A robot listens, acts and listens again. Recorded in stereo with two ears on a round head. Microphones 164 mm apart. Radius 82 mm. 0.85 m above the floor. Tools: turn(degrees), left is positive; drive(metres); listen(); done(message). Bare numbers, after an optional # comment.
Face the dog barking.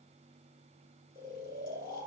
listen()
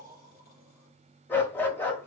turn(30)
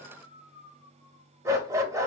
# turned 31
# So it is at 20° right.
turn(-20)
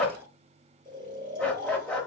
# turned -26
done("Facing the dog barking.")